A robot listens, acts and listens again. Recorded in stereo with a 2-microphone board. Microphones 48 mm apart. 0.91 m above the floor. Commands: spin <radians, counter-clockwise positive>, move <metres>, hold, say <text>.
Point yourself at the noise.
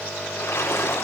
spin 1.22
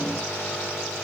hold
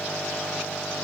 say I heard a splash, but can't make it out now. It was about straight ahead or 40° left.